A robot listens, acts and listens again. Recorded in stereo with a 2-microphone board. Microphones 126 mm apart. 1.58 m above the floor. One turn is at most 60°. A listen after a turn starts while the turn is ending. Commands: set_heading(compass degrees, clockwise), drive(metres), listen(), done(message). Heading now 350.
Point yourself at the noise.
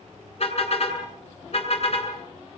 set_heading(295)
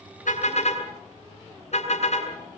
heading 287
set_heading(227)
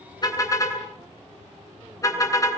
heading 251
set_heading(226)
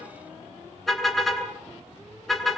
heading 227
done("Facing the car horn.")